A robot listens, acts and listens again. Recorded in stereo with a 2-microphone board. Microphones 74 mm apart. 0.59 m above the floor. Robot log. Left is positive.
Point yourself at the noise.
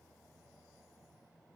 cmd idle
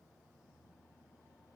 cmd idle
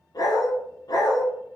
note: The dog barking: about 70° left or 110° left.
cmd yaw +70
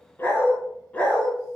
note: So it is at 15° left.
cmd yaw +15
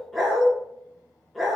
end: Facing the dog barking, 2 to 4 m away.